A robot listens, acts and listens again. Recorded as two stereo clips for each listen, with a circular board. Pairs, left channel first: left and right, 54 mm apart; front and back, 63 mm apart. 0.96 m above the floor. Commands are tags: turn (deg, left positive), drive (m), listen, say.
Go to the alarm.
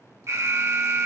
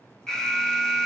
<turn deg="-80"/>
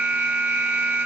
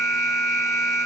<turn deg="-25"/>
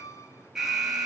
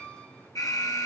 <drive m="1.0"/>
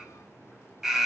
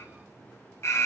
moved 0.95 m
<turn deg="-10"/>
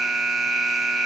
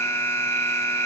<drive m="1.0"/>
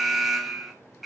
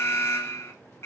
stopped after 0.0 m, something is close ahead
<say>Arrived at the alarm, straight ahead.</say>